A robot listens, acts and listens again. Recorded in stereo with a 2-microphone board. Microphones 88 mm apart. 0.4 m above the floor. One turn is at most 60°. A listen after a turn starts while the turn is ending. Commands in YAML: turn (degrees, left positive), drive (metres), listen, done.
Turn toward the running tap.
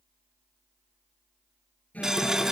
turn: -30
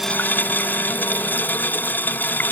turn: 25
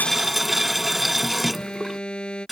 done: "Found it: a running tap, straight ahead."